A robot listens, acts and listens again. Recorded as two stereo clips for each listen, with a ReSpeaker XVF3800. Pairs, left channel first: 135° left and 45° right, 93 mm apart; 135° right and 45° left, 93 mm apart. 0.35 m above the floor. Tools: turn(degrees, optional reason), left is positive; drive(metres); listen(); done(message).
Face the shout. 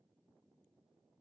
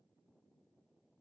listen()
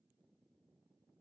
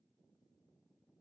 listen()
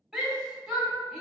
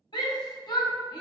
turn(degrees=-135, reason="The shout: 135° right.")
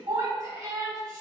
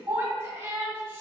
turn(degrees=-15, reason="The shout is now 15° right.")
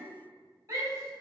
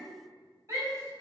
turn(degrees=-10, reason="The shout is now 10° right.")
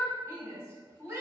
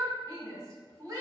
done("Facing the shout.")